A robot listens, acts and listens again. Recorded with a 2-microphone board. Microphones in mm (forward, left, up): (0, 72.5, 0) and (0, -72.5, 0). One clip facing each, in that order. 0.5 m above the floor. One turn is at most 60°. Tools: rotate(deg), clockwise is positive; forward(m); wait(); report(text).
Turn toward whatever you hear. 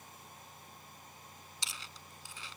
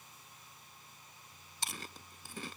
rotate(50)
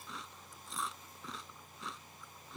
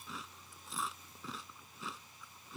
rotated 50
report("Found it: chewing, straight ahead.")